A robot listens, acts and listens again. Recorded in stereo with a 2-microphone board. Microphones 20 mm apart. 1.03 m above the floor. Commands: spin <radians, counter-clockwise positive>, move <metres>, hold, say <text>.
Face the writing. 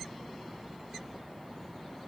hold
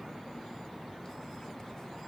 hold
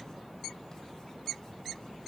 say I can't make out writing to turn to.